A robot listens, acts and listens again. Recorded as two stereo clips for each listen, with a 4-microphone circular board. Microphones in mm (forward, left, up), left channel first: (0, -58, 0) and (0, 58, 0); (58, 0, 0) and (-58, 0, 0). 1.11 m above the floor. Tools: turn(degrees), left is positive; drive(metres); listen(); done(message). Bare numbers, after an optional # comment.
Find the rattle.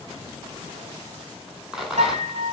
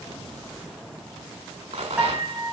# The rattle: 175° left.
turn(175)
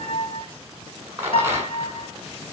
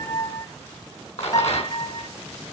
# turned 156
# The rattle is now 20° left.
turn(20)
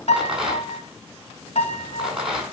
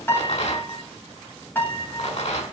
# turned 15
done("Found it: a rattle, straight ahead, over 4 m away.")